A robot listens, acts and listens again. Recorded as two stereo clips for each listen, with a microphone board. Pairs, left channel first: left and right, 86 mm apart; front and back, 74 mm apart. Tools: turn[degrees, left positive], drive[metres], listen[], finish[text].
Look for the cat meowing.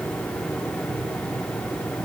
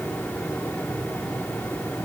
Action: listen[]
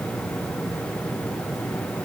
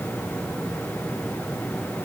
Action: listen[]
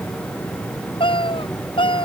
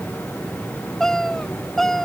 Thought: The cat meowing: 85° left.
Action: turn[85]
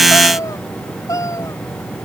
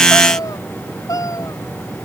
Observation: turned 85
Thought: The cat meowing is now 40° left.
Action: turn[40]
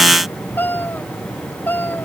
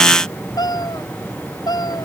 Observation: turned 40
Thought: The cat meowing is now 20° left.
Action: turn[20]
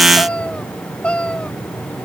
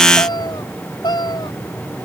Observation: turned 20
Thought: The cat meowing is now 10° left.
Action: turn[10]
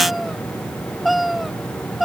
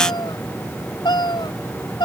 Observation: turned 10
Action: finish[Found it: a cat meowing, straight ahead.]